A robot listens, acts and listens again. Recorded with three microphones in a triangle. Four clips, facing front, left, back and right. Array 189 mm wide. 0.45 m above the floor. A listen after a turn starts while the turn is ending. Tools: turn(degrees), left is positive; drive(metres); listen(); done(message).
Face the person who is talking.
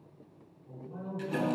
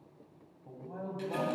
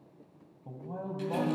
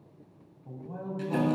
turn(degrees=180)
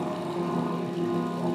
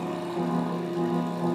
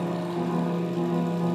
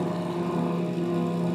listen()
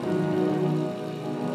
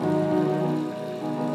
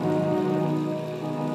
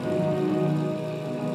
listen()
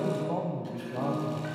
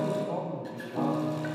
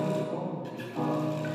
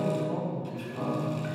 turn(degrees=20)
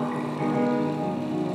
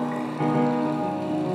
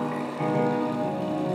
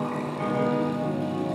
listen()
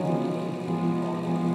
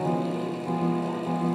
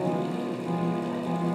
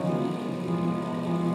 listen()
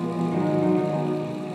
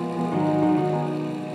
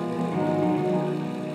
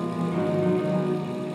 done("I heard a man speaking from this way, but can't make it out now.")